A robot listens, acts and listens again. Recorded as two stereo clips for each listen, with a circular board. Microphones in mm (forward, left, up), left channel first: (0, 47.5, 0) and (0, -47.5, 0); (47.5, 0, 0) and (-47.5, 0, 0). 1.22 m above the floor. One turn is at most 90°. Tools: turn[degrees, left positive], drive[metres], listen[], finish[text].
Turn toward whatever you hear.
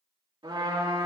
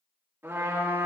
Thought: The trumpet: 115° right.
Action: turn[-90]
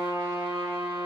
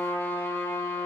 Thought: The trumpet is now 60° right.
Action: turn[-60]
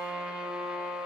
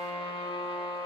Thought: The trumpet is now 10° right.
Action: turn[-10]
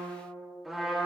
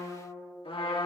Action: finish[Facing the trumpet, 2 to 4 m away.]